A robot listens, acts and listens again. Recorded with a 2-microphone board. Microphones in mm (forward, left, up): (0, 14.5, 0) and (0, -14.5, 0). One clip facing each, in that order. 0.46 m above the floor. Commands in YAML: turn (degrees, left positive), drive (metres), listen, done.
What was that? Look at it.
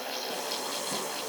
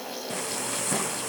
turn: -65
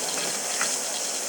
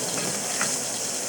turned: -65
done: "Facing the frying."